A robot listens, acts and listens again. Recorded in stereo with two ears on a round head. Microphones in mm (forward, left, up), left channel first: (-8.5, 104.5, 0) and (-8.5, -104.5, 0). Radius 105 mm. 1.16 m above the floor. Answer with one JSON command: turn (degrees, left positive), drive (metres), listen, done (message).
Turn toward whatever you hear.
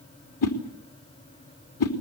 {"turn": 70}
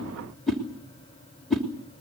{"done": "Facing the whoosh, 2 to 4 m away."}